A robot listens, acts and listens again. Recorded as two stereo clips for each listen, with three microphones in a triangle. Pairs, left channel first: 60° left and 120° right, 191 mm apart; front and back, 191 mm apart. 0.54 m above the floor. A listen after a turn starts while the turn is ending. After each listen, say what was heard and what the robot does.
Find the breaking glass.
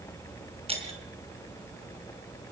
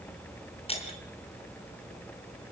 The breaking glass: 60° right. Turn 60° right.
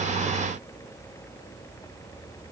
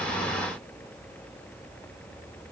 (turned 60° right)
Facing where the breaking glass came from. I can't hear it now.